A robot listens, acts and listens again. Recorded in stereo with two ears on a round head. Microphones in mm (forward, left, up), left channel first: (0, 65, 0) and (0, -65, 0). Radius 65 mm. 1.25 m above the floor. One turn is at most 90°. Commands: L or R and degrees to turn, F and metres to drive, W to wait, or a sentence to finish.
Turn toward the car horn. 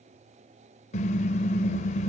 L50
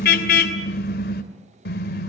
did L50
L75
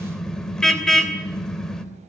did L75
Facing the car horn, 2 to 4 m away.